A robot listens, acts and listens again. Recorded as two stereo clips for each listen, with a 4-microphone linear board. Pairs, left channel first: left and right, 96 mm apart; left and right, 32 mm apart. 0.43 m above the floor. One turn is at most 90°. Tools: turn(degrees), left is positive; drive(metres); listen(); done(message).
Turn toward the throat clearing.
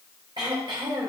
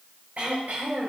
turn(degrees=-55)
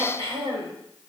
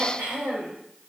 turn(degrees=-70)
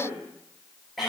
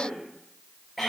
done("Facing the throat clearing, 2 to 4 m away.")